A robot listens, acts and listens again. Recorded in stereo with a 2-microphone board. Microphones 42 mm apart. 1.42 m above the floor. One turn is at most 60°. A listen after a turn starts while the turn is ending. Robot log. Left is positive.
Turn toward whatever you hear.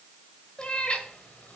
note: The cat meowing: about 30° left or 150° left.
cmd yaw +30
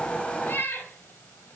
note: So it is at 115° left.
cmd yaw +60
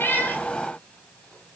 note: Nothing new. It was at 55° left.
cmd yaw +55
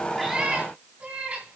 note: The cat meowing is now 35° right.
cmd yaw -35
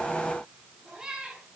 note: The cat meowing is now 15° right.
cmd yaw -15
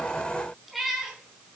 end: Facing the cat meowing.